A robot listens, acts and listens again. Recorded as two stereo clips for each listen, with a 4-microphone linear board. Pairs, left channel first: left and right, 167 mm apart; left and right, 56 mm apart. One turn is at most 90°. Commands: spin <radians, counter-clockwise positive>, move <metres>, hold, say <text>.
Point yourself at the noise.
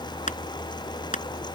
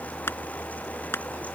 spin 0.79
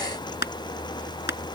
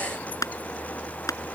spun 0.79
spin 1.57
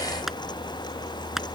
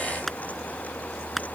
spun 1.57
say Found it: crushing, straight ahead.